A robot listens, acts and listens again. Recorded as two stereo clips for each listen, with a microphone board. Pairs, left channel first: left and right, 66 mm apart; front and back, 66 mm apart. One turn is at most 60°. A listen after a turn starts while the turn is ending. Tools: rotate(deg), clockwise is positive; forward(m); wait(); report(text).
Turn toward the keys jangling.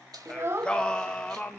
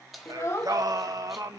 rotate(60)
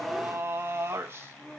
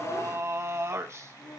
rotate(30)
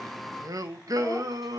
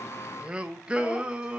wait()
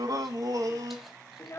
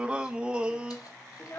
report("Facing where the keys jangling came from. I can't hear it now.")